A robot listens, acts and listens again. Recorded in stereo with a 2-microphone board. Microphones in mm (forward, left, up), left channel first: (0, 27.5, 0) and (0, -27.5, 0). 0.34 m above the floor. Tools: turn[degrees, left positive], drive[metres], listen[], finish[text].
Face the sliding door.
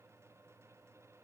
Action: listen[]
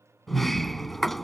Action: turn[30]
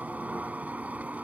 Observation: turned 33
Thought: So it is at 30° right.
Action: turn[-30]
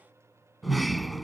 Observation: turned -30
Action: finish[Facing the sliding door.]